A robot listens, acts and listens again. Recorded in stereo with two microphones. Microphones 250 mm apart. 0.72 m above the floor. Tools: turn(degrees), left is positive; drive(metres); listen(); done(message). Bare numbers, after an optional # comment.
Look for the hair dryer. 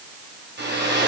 # The hair dryer: about 45° right or 135° right.
turn(-45)
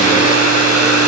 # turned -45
# So it is at 90° right.
turn(-90)
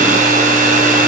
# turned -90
# The hair dryer is now 35° right.
turn(-35)
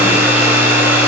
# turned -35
# The hair dryer is now 10° right.
turn(-10)
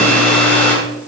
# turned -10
done("Found it: a hair dryer, straight ahead.")